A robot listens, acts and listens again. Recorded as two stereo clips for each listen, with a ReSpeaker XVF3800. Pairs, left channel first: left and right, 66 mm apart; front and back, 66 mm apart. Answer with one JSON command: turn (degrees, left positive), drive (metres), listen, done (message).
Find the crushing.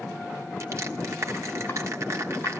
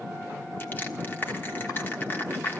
{"turn": -55}
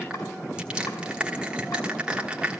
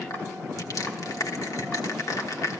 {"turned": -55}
{"turn": -20}
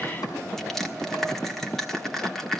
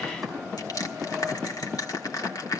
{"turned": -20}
{"done": "Facing the crushing."}